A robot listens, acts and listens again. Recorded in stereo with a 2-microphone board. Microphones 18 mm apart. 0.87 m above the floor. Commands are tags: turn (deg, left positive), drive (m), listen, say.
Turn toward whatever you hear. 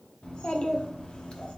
<turn deg="90"/>
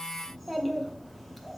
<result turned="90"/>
<turn deg="10"/>
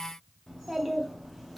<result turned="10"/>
<say>Facing the child speaking.</say>